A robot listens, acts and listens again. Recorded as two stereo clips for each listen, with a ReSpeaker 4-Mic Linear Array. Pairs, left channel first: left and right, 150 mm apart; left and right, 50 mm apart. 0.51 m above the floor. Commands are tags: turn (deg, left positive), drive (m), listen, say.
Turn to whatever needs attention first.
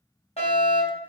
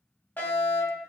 <turn deg="45"/>
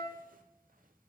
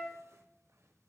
<listen/>
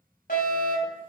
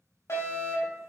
<turn deg="90"/>
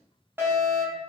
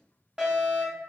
<turn deg="-15"/>
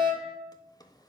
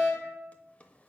<say>Found it: a fire alarm, straight ahead.</say>